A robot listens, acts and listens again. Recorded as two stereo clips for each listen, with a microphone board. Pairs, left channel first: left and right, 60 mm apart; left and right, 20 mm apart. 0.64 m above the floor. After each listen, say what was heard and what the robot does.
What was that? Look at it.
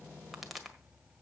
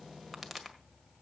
Turn 30° right.
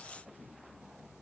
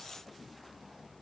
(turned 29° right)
Keep listening.
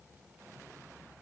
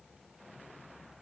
I heard a pop, but can't make it out now. It was about 25° left or 145° right.